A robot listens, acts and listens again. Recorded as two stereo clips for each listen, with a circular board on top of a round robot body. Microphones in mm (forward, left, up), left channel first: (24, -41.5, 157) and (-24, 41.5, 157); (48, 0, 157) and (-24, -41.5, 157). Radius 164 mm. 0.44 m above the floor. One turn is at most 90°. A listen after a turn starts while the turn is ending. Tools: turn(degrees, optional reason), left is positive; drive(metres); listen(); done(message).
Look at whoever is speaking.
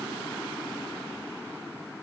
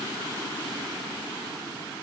listen()
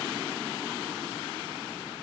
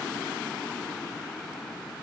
listen()
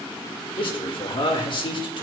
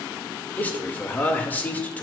turn(degrees=-40, reason="The man speaking: 40° right.")
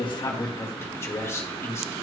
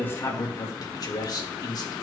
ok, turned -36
done("Facing the man speaking.")